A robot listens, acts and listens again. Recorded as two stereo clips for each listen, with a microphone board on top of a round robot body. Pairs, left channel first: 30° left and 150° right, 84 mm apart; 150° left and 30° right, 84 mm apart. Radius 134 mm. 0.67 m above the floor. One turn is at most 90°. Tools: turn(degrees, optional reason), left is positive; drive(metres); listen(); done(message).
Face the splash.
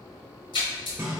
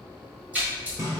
turn(degrees=45, reason="The splash: 45° left.")
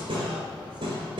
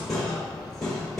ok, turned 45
done("I heard a splash from this way, but can't make it out now.")